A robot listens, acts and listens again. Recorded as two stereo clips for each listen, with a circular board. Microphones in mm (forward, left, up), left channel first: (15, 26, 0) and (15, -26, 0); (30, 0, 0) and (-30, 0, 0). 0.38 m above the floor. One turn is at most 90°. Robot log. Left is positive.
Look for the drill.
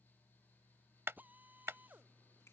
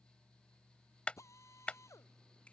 note: The drill: 35° right.
cmd yaw -35
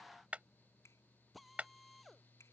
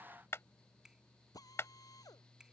end: Facing the drill.